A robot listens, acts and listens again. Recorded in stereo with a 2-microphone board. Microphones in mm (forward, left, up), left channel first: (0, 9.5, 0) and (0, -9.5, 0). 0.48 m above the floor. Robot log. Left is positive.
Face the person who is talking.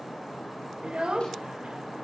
note: The child speaking: about 60° right or 120° right.
cmd yaw -60
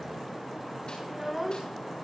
note: So it is at 10° right.
cmd yaw -10
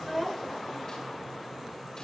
end: Found it: a child speaking, straight ahead.